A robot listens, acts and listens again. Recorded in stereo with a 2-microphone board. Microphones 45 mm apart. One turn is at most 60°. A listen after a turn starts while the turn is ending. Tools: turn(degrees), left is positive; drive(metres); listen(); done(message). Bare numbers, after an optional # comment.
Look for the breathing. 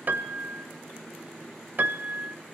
listen()
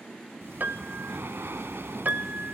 # The breathing: about 70° right or 110° right.
turn(-60)
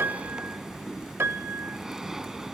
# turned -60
# So it is at 10° right.
turn(-10)
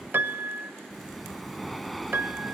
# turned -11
done("Found it: breathing, straight ahead.")